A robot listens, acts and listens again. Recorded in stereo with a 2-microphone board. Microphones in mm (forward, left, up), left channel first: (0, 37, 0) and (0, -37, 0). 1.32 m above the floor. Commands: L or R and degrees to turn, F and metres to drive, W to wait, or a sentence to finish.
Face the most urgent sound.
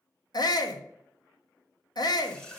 L60
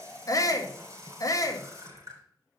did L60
L55
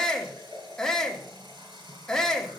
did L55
L10
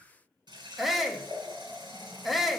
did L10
Facing the shout.